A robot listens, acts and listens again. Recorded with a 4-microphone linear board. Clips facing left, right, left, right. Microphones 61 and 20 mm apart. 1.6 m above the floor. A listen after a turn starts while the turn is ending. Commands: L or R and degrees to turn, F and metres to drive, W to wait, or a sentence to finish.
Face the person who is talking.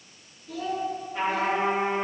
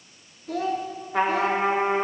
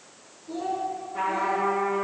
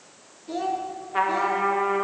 R55
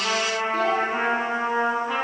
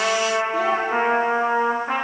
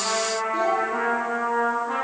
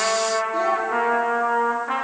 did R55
W
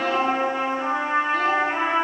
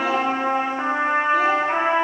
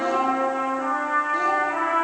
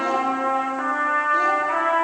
W
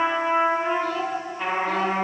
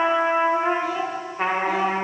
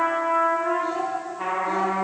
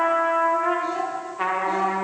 I heard a child speaking, but can't make it out now. It was about straight ahead or 70° right.